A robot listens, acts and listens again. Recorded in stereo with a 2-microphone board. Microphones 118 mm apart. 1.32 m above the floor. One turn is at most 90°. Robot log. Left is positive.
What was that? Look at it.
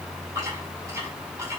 cmd idle
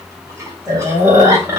note: The chewing: about 30° right or 150° right.
cmd yaw -30
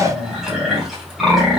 end: Facing the chewing.